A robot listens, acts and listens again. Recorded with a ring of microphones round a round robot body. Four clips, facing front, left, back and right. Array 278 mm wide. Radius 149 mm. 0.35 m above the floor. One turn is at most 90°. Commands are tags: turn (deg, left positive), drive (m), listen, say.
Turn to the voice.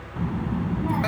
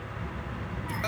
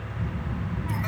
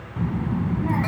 <turn deg="-50"/>
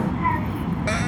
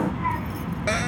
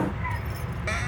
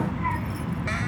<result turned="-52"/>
<say>Facing the child speaking.</say>